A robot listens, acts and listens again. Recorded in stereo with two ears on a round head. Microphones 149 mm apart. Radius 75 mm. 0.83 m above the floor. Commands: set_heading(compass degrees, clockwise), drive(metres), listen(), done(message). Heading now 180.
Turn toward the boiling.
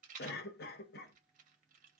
listen()
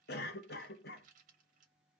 listen()
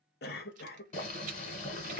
set_heading(135)
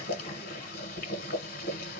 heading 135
set_heading(60)
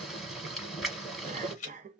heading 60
done("Found it: boiling, straight ahead.")